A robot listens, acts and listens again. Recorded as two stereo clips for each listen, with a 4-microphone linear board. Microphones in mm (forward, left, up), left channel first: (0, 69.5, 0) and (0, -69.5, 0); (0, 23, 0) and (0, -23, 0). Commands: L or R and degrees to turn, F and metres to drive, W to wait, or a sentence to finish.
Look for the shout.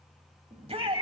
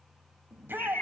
R45
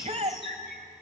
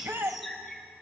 R75
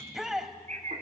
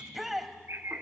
Facing the shout, 1 to 2 m away.